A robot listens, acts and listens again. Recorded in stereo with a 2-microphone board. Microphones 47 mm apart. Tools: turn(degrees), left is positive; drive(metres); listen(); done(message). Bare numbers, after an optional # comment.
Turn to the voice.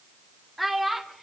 turn(30)
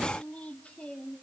# So it is at 150° left.
turn(150)
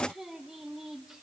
# The child speaking is now 10° right.
turn(-10)
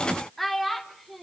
done("Found it: a child speaking, straight ahead.")